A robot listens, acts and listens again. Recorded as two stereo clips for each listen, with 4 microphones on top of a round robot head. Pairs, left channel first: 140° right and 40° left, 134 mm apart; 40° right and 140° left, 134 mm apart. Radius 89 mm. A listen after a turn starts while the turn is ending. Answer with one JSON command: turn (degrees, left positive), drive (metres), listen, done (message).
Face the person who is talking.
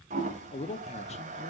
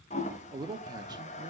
{"turn": -165}
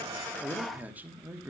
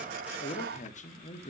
{"turn": -35}
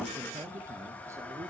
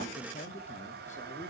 {"listen": true}
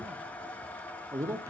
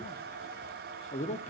{"turn": -25}
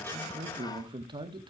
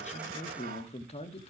{"turn": -10}
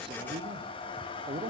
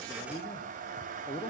{"done": "Found it: a man speaking, straight ahead."}